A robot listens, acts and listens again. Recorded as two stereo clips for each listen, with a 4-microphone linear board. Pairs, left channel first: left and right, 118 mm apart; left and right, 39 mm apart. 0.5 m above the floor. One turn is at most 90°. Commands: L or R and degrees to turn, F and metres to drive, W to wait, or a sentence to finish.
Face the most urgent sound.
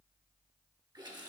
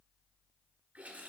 W
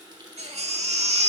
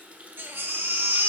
R65
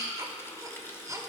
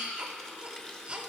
R30
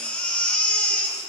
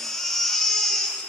L15
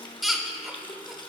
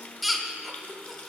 Facing the baby crying, under 1 m away.